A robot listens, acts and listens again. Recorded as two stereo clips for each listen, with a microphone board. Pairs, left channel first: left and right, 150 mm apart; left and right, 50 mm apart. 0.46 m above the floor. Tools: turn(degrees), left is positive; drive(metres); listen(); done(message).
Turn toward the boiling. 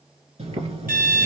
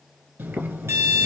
turn(degrees=-45)
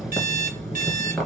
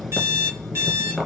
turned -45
done("Facing the boiling, 1 to 2 m away.")